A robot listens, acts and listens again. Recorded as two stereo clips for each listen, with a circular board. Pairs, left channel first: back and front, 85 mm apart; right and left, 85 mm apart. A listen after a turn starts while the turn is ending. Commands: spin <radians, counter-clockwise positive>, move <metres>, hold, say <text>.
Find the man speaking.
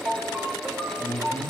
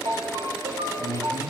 spin 2.18
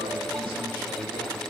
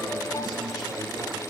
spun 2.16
hold
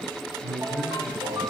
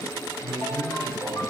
spin 0.17
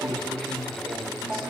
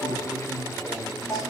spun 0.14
say Facing the man speaking.